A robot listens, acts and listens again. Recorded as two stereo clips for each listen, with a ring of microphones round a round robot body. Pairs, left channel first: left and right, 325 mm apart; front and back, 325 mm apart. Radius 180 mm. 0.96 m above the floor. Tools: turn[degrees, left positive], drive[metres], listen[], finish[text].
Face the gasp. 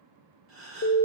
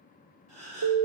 Thought: The gasp: 140° right.
Action: turn[-140]
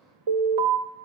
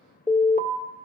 Action: finish[I heard a gasp from this way, but can't make it out now.]